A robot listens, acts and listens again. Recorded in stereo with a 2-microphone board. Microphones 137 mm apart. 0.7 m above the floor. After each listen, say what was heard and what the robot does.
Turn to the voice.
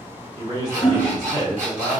The man speaking: about 30° right or 150° right. Turn 30° right.
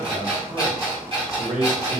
So it is at 115° right. Turn 115° right.
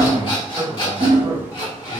The man speaking is now 40° right. Turn 40° right.
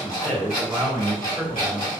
The man speaking is now 15° left. Turn 15° left.
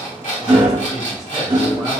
Keep listening.
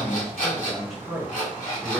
Facing the man speaking, 1 to 2 m away.